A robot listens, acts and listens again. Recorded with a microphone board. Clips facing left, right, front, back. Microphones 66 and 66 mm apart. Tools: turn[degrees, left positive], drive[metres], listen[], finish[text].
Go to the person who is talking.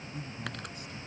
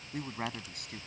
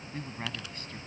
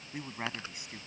Thought: The man speaking: 105° right.
Action: turn[-105]
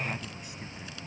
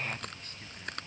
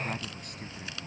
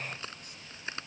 Action: listen[]
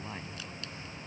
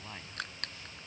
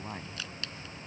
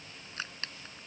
Thought: The man speaking is now 10° left.
Action: turn[10]
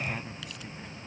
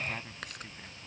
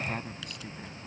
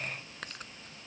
Action: drive[1.0]
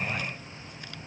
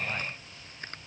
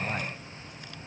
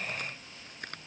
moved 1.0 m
Action: listen[]
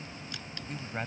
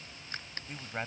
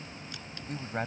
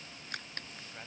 Action: drive[1.0]
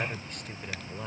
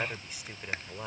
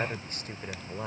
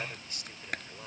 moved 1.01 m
Thought: The man speaking is now 10° right.
Action: turn[-10]
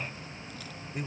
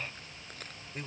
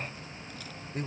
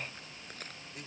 Action: drive[1.0]
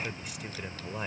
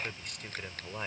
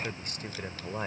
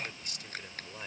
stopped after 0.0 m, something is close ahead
Action: finish[Arrived at the man speaking, straight ahead.]